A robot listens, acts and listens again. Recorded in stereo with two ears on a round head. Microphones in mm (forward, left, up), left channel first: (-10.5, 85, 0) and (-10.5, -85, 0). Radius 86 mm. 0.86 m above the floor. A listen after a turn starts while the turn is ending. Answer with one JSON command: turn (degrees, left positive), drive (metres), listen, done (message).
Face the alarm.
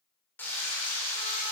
{"listen": true}
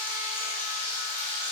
{"listen": true}
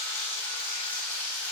{"done": "I can't make out an alarm to turn to."}